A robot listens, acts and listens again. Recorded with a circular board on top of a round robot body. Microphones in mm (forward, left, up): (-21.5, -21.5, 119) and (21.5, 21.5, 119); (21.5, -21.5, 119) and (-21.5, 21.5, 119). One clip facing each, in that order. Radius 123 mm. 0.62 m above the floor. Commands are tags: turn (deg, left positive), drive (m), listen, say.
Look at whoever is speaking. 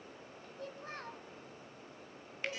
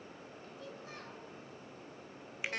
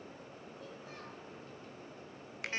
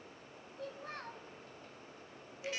<turn deg="175"/>
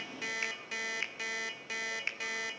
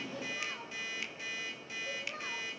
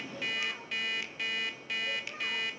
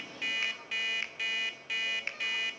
<listen/>
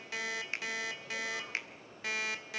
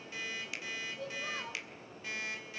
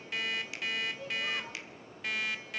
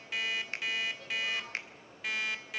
<turn deg="30"/>
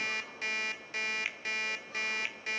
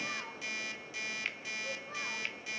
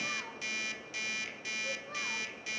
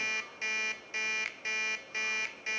<listen/>
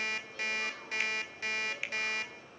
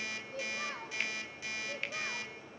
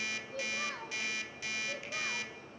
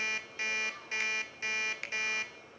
<turn deg="-10"/>
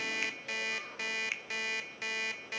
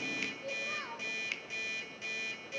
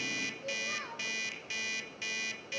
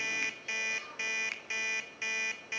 <say>Found it: a child speaking, straight ahead, 2 to 4 m away.</say>